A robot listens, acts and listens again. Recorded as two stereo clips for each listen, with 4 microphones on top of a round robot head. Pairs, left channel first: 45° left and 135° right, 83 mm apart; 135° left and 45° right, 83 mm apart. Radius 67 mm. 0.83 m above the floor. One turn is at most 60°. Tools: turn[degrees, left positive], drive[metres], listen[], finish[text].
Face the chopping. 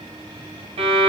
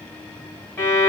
Action: listen[]
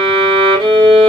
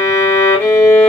Action: listen[]
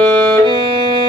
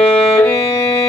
Action: finish[I can't make out chopping to turn to.]